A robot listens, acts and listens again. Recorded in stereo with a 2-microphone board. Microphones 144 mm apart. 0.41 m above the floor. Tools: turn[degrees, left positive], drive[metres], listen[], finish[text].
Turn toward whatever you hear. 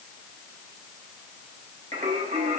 Thought: The singing: about 65° right or 115° right.
Action: turn[-65]
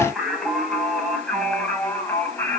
Thought: So it is at 15° left.
Action: turn[15]
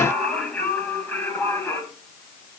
Thought: The singing is now 15° left.
Action: turn[15]
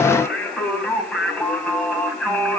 Action: finish[Found it: singing, straight ahead.]